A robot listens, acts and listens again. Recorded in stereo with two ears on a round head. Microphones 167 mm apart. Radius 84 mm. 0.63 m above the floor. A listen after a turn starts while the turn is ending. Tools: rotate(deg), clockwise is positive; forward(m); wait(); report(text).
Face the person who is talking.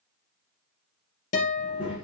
rotate(30)
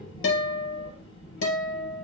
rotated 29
rotate(-25)
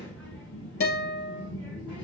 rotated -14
report("Found it: a child speaking, straight ahead.")